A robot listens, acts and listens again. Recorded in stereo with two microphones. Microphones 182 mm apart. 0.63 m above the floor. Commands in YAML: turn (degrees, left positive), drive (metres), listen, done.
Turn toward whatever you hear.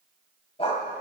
turn: 35
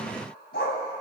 turn: 100
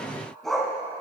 done: "Found it: a dog barking, straight ahead."